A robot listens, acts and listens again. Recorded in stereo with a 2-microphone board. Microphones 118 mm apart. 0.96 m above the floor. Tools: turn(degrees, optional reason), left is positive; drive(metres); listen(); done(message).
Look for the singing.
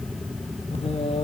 turn(degrees=60, reason="The singing: about 60° left or 120° left.")
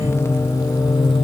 turn(degrees=40, reason="So it is at 40° left.")
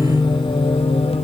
turn(degrees=55, reason="The singing is now 55° left.")
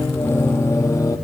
turn(degrees=30, reason="The singing is now 30° left.")
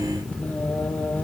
turn(degrees=15, reason="The singing is now 15° left.")
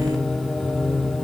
done("Facing the singing, 2 to 4 m away.")